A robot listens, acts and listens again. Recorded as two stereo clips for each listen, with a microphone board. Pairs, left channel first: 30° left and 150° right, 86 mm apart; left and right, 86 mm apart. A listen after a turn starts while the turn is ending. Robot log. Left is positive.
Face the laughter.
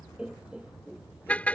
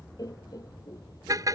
note: The laughter: 135° left.
cmd yaw +135
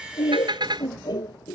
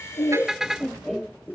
end: Facing the laughter.